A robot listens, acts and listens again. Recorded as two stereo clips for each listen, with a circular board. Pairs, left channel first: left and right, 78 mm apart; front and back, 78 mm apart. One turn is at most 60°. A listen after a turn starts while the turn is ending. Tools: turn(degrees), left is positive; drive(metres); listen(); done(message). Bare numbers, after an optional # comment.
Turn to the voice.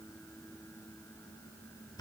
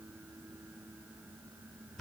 listen()
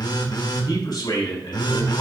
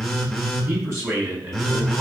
# The man speaking: 125° left.
turn(60)
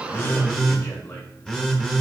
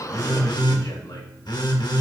# Nothing new. It was at 65° left.
turn(60)
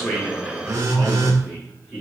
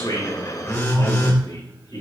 # The man speaking is now 10° right.
turn(-10)
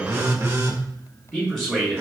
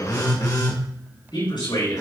done("Facing the man speaking, over 4 m away.")